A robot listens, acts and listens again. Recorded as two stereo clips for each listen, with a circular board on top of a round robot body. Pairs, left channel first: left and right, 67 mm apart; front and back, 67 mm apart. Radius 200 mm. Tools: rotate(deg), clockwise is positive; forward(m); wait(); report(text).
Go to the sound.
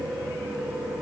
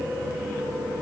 wait()
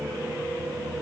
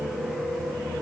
wait()
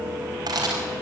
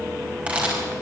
rotate(110)
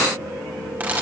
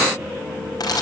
rotate(25)
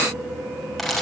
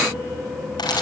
forward(1.0)
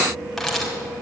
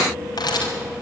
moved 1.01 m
forward(1.0)
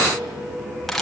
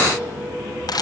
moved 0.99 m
forward(1.0)
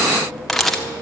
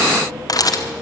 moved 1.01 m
forward(1.0)
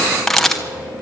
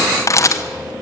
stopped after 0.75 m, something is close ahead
report("I am next to the camera shutter.")